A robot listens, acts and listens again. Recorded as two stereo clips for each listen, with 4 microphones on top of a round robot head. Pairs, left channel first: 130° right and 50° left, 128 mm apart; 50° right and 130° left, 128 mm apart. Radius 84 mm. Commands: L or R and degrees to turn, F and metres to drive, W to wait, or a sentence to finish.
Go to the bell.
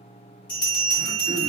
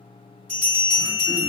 R155
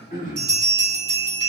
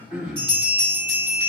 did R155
F1.0
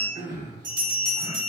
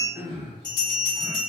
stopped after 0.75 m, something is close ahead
Arrived at the bell, straight ahead.